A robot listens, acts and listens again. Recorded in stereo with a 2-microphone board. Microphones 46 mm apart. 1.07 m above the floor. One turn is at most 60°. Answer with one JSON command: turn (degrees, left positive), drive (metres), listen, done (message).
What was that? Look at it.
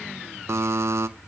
{"turn": -60}
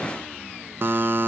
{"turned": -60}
{"turn": -45}
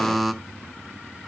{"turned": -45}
{"done": "Found it: a buzzer, straight ahead."}